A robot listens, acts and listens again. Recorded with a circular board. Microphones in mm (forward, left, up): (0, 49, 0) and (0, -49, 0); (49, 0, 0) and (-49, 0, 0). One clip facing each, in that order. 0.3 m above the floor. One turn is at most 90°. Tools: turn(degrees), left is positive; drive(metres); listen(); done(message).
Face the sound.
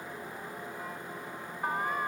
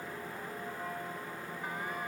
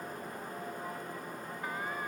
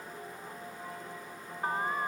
turn(degrees=90)
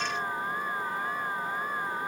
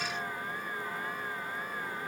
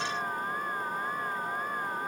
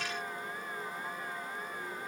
turn(degrees=40)
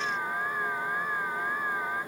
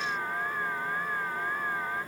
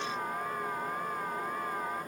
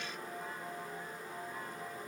turn(degrees=10)
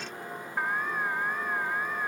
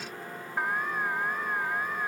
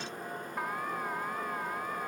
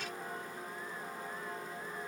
done("Facing the alarm.")